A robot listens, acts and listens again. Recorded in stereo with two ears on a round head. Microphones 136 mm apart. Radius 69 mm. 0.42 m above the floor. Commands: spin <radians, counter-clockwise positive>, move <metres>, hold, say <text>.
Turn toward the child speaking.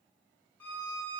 hold
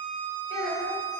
spin -1.22
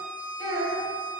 spin -0.44
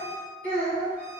spin 0.17
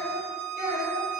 spin 0.17
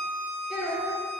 say Found it: a child speaking, straight ahead.